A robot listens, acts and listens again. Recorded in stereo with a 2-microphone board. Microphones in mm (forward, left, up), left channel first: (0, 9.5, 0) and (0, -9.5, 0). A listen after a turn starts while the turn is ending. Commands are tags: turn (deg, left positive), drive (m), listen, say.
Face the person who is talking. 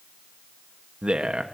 <turn deg="-65"/>
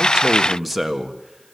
<say>Found it: a man speaking, straight ahead.</say>